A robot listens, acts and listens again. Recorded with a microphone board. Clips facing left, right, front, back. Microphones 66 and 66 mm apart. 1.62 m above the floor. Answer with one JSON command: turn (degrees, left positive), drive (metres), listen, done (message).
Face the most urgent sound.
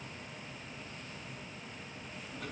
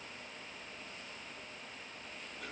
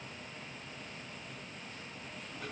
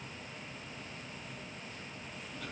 {"listen": true}
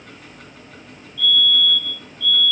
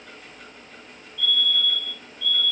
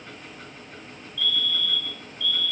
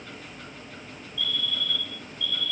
{"turn": 100}
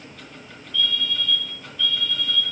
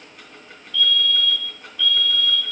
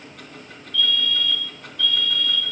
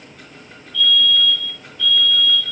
{"turn": 20}
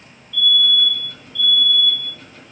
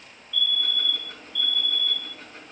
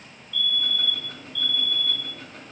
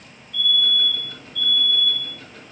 {"done": "Found it: a fire alarm, straight ahead."}